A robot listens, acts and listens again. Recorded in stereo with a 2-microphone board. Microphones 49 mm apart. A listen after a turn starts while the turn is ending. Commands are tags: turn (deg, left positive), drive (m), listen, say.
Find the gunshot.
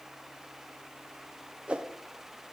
<listen/>
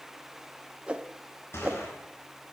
<turn deg="55"/>
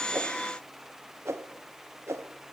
<listen/>
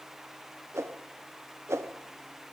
<say>I heard a gunshot, but can't make it out now. It was about straight ahead or 70° left.</say>